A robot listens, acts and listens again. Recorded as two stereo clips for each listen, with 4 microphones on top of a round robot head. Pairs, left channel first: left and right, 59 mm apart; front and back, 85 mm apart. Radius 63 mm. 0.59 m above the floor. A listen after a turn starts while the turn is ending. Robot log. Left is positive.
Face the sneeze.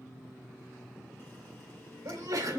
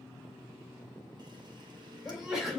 note: The sneeze: 90° right.
cmd yaw -90
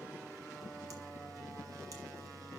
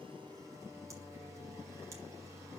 end: I heard a sneeze from this way, but can't make it out now.